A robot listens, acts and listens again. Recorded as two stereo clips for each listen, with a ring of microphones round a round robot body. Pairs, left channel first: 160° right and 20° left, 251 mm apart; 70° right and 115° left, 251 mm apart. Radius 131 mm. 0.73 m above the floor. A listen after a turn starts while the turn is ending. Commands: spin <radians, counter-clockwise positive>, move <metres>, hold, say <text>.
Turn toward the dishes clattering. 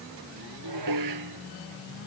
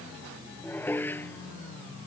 spin 0.26
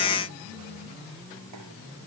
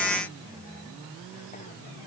hold
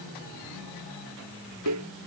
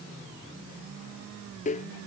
say Found it: dishes clattering, straight ahead.